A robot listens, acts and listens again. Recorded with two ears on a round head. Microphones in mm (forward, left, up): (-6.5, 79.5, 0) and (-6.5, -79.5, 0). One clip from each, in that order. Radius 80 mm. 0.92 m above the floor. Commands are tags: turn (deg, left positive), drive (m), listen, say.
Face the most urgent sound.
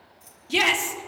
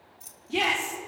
<turn deg="70"/>
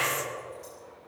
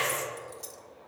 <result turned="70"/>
<say>Found it: a shout, straight ahead, 2 to 4 m away.</say>